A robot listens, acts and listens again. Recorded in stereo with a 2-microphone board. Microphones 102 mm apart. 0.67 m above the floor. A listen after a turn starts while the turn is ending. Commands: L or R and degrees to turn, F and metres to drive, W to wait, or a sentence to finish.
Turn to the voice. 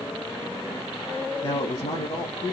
L65
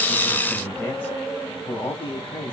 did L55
L15
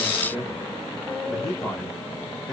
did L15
Facing the man speaking.